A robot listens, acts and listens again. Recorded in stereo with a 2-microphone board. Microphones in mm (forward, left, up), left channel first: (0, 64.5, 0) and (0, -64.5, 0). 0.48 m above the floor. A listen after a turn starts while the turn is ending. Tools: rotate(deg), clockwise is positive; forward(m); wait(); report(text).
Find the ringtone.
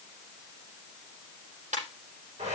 rotate(90)
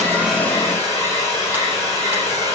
wait()
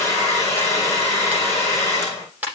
rotate(15)
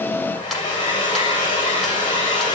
wait()
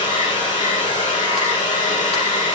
wait()
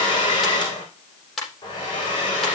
report("Facing the ringtone, over 4 m away.")